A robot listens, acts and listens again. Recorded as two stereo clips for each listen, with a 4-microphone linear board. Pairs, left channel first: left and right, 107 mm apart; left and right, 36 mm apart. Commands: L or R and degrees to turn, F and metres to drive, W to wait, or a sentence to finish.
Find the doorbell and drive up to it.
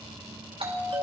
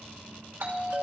R60
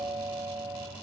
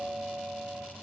F1.0
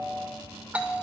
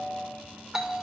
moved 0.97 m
R15
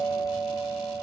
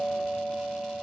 F1.0
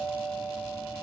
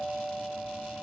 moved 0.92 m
F1.0
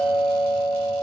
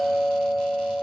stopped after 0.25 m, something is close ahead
Arrived at the doorbell, straight ahead.